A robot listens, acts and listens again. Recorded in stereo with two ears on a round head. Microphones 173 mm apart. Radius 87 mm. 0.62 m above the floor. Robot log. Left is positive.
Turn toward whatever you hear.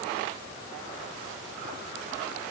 cmd idle
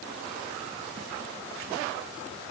cmd idle
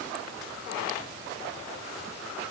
end: I can't make out anything to turn to.